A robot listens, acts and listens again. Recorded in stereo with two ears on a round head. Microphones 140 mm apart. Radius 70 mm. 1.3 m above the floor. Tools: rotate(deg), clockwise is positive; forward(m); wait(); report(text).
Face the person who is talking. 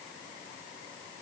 wait()
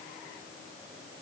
wait()
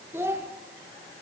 rotate(15)
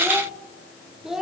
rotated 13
report("Found it: a child speaking, straight ahead, under 1 m away.")